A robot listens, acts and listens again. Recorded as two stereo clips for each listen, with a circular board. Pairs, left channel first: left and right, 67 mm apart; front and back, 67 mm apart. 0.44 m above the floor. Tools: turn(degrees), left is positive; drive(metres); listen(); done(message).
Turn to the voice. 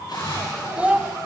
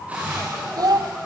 turn(degrees=-160)
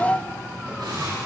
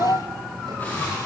turn(degrees=25)
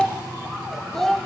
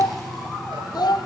done("Facing the child speaking.")